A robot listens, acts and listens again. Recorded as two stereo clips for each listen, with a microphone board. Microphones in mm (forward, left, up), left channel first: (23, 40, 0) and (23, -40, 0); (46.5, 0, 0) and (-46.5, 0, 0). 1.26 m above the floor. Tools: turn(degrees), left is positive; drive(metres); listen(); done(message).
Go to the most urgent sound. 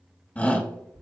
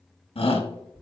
turn(degrees=20)
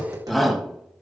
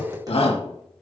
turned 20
drive(metres=1.0)
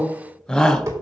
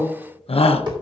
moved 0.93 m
turn(degrees=10)
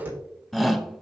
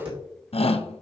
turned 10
drive(metres=1.0)
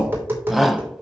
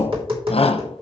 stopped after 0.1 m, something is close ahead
done("I am next to the shout.")